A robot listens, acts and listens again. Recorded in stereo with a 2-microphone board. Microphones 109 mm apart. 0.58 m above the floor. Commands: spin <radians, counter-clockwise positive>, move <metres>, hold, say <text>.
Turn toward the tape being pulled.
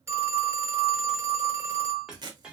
spin -0.79
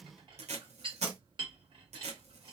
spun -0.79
spin -1.57
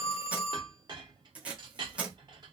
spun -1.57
spin -0.17
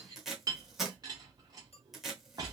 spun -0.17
say Found it: tape being pulled, straight ahead, under 1 m away.